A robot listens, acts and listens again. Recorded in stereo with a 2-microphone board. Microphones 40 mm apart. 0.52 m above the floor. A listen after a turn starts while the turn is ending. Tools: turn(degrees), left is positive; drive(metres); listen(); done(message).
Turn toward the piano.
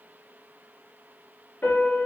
turn(degrees=50)
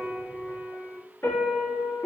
turn(degrees=80)
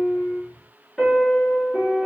turn(degrees=10)
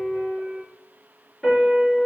done("Facing the piano, 1 to 2 m away.")